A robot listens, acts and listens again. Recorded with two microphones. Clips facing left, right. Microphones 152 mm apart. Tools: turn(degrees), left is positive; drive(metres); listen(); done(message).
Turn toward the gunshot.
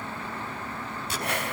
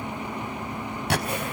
turn(degrees=-70)
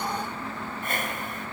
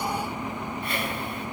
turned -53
listen()
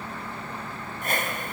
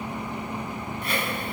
done("I heard a gunshot, but can't make it out now. It was about 20° right or 55° right.")